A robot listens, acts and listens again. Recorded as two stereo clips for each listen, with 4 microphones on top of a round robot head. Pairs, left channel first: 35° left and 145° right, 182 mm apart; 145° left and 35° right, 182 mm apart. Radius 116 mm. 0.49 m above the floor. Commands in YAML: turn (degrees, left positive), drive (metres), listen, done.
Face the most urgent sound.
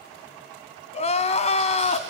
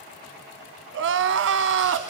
turn: -20
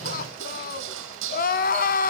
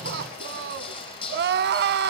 done: "Facing the crying, 1 to 2 m away."